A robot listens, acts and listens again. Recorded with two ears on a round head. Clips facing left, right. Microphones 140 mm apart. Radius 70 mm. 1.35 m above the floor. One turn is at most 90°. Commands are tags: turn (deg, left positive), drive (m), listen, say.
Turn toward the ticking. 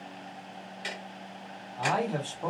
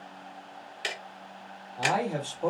<turn deg="-70"/>
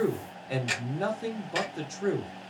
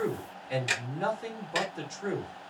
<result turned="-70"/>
<say>Facing the ticking.</say>